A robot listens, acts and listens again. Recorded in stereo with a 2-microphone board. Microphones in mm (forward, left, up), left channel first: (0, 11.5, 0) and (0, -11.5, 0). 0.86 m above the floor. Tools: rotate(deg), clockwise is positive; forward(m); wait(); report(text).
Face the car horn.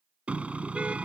rotate(90)
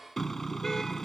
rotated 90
rotate(-15)
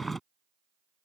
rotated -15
report("Found it: a car horn, straight ahead.")